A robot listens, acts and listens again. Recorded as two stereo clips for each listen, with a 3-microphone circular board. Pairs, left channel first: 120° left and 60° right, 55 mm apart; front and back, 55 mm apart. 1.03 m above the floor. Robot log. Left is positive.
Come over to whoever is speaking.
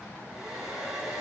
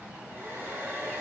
cmd idle
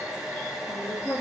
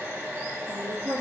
note: The woman speaking: 155° left.
cmd yaw +155
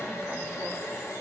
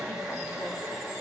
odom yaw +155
cmd idle
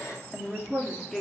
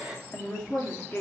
note: The woman speaking is now 35° left.
cmd yaw +35
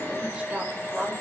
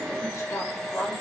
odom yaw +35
note: The woman speaking is now 10° left.
cmd yaw +10
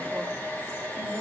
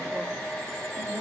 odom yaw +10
cmd idle
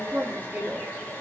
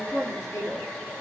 cmd fwd 1.0
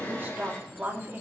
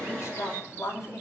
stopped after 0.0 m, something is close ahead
end: Blocked. The woman speaking is further on, straight ahead.